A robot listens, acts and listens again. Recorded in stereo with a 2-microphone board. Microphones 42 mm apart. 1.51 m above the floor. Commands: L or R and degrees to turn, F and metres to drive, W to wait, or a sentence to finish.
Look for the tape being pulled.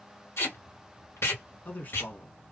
L90
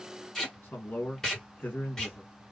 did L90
L15
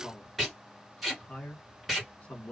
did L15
Facing the tape being pulled.